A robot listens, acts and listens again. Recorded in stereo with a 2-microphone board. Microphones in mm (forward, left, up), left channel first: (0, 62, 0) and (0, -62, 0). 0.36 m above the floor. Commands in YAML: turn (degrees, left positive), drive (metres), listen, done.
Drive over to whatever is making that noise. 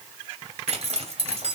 turn: -55
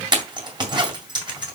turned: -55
turn: -45
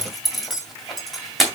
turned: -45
drive: 1.0
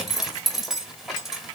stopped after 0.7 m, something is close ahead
done: "I am next to the zipper."